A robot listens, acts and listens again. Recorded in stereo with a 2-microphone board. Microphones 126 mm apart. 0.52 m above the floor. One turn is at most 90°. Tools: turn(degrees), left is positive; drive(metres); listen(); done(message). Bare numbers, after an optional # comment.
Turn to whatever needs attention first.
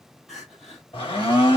turn(30)
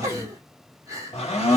# So it is at 30° right.
turn(-30)
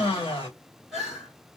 done("Found it: crying, straight ahead, 2 to 4 m away.")